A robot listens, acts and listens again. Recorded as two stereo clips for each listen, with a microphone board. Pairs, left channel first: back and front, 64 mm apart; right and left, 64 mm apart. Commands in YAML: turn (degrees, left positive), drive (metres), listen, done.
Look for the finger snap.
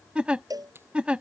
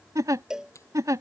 turn: -50
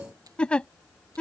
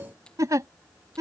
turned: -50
listen: true
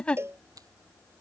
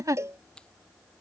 turn: -15
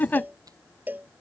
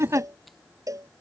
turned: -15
listen: true
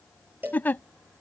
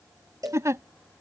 listen: true
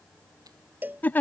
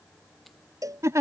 done: "Facing where the finger snap came from. I can't hear it now."